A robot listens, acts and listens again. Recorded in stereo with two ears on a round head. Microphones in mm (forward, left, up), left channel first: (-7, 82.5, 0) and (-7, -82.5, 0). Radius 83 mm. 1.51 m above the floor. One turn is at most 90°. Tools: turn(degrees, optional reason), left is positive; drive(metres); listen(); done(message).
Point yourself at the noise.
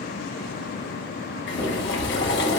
turn(degrees=65, reason="The boiling: about 65° left or 115° left.")
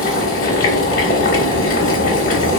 turn(degrees=45, reason="So it is at 45° left.")
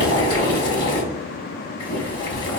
turn(degrees=25, reason="The boiling is now 25° left.")
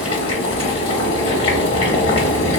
turn(degrees=30, reason="The boiling is now 30° left.")
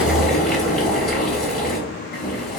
done("Found it: boiling, straight ahead.")